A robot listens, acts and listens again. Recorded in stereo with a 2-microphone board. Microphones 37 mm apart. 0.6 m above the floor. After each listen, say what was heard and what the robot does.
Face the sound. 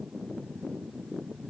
Keep listening.
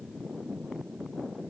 Keep listening.
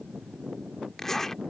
Turn 30° left.
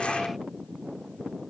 Keep listening.
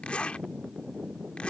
So it is at 135° left. Turn 135° left.
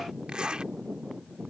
The zipper is now 30° right. Turn 30° right.
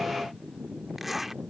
Found it: a zipper, straight ahead.